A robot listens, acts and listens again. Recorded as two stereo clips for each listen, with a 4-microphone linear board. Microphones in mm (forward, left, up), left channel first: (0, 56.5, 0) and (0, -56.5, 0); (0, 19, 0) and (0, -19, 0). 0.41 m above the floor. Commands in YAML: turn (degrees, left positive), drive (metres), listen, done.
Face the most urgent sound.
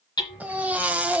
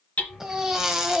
turn: -30
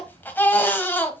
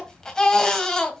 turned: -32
turn: 20
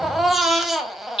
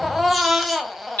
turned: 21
done: "Found it: a baby crying, straight ahead, 1 to 2 m away."